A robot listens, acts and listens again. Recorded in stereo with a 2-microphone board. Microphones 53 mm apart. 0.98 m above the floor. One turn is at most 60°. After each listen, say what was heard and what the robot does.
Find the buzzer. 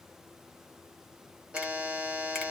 The buzzer: about 20° right or 160° right. Turn 20° right.
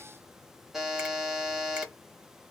Found it: a buzzer, straight ahead, under 1 m away.